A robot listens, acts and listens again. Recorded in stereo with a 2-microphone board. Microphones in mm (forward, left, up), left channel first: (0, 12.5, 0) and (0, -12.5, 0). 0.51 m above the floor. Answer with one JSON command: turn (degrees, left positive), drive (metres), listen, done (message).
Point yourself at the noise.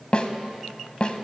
{"turn": 45}
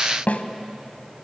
{"turn": 90}
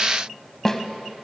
{"turn": 15}
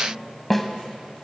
{"done": "Facing the snare drum."}